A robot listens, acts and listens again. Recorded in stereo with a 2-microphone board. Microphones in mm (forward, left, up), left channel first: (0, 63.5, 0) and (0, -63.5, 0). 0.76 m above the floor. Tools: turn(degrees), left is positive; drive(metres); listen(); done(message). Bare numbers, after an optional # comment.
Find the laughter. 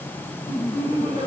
# The laughter: about 70° left or 110° left.
turn(70)
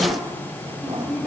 done("Found it: laughter, straight ahead.")